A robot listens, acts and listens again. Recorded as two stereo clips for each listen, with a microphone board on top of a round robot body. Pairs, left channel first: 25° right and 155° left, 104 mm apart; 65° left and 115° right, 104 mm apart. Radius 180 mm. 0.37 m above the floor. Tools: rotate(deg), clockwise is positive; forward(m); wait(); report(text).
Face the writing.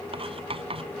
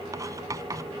rotate(170)
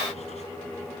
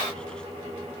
wait()
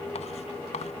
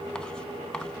wait()
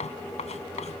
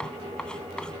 rotate(15)
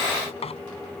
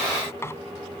report("Found it: writing, straight ahead.")